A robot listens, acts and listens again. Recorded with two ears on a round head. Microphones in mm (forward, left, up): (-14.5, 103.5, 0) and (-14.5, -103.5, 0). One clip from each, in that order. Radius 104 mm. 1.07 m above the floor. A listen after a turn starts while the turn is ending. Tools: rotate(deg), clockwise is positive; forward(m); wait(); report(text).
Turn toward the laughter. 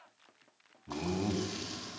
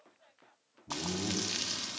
rotate(-60)
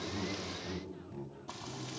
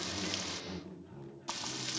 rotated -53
rotate(-10)
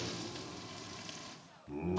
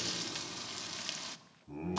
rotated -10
report("Found it: laughter, straight ahead.")